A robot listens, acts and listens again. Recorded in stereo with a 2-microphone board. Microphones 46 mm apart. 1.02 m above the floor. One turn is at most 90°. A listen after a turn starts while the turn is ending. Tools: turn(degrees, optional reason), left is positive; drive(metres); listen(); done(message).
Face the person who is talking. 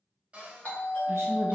turn(degrees=-65, reason="The woman speaking: about 65° right or 115° right.")
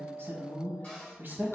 turn(degrees=-50, reason="So it is at 50° right.")
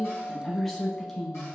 done("Found it: a woman speaking, straight ahead.")